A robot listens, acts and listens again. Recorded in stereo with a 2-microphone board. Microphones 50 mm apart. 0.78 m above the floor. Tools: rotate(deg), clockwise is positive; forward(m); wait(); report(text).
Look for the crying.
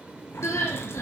rotate(-90)
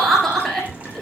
rotate(-10)
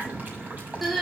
report("Found it: crying, straight ahead.")